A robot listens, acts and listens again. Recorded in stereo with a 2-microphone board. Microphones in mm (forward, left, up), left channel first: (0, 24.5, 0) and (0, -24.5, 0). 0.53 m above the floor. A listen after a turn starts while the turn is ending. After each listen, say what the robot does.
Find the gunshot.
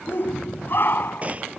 Turn 30° right.
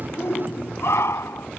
Keep listening.
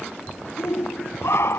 I heard a gunshot, but can't make it out now. It was about straight ahead or 120° right.